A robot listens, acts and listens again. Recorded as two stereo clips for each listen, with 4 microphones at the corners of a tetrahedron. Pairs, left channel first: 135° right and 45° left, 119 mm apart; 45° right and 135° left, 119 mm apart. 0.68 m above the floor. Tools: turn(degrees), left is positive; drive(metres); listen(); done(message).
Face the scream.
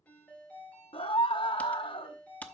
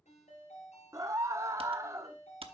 turn(degrees=-170)
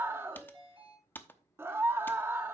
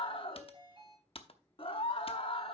turn(degrees=-20)
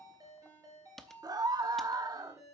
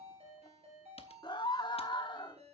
done("Facing the scream.")